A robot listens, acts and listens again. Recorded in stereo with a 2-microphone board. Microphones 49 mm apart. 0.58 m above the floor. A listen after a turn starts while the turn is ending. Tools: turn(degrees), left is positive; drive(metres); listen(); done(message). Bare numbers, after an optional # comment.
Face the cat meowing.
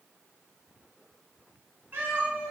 # The cat meowing: about 40° right or 140° right.
turn(-40)
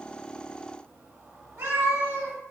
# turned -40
# So it is at 100° right.
turn(-100)
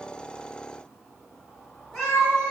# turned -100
done("Facing the cat meowing.")